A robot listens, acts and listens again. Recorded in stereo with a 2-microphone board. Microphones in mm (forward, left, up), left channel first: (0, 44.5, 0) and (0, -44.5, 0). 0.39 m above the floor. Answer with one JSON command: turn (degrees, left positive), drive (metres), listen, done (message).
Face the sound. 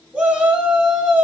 {"turn": -15}
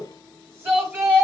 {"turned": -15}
{"turn": -155}
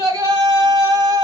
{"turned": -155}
{"turn": -55}
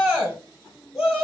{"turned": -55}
{"turn": -10}
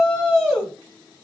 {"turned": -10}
{"done": "Facing the shout."}